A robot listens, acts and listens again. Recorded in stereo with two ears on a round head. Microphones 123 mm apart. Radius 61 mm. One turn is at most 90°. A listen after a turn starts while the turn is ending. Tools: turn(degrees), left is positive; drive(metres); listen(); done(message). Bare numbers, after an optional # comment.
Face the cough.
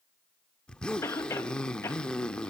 # The cough: about 20° left or 160° left.
turn(20)
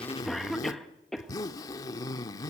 done("Found it: a cough, straight ahead, 1 to 2 m away.")